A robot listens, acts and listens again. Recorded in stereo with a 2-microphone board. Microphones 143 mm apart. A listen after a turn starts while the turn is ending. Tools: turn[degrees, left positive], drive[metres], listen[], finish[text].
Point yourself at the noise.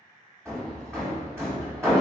Thought: The hammering: about 20° right or 160° right.
Action: turn[-20]
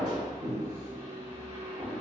Thought: So it is at 135° right.
Action: turn[-135]
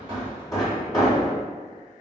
Thought: The hammering is now 25° left.
Action: turn[25]
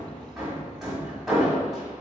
Action: finish[Facing the hammering, 1 to 2 m away.]